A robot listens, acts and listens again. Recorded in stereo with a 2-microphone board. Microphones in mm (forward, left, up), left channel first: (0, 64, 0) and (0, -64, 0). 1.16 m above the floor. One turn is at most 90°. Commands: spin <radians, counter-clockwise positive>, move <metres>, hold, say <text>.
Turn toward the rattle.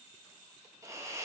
hold
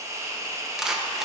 spin -0.52
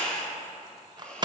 spin -1.57
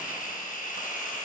spin -0.96
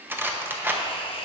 spin -0.26
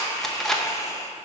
say Found it: a rattle, straight ahead.